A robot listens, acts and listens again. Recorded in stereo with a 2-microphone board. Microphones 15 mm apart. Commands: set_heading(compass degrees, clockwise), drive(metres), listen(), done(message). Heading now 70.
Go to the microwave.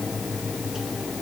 listen()
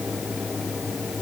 listen()
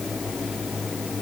done("I can't make out a microwave to turn to.")